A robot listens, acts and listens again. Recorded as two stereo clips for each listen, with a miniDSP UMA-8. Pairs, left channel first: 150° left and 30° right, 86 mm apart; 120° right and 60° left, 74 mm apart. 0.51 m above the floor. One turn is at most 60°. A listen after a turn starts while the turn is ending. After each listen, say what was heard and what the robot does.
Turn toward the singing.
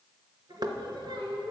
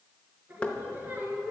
The singing: 10° right. Turn 10° right.
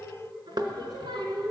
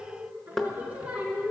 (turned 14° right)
The singing is now 20° right. Turn 20° right.
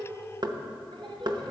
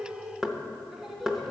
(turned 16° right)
The singing is now 35° right. Turn 35° right.
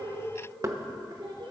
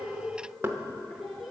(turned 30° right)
The singing is now 30° right. Turn 30° right.
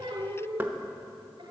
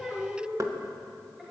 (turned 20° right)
The singing is now 20° right. Turn 20° right.
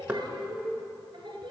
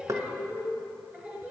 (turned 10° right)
The singing is now 10° right. Turn 10° right.
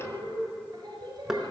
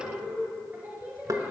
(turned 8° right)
Facing the singing.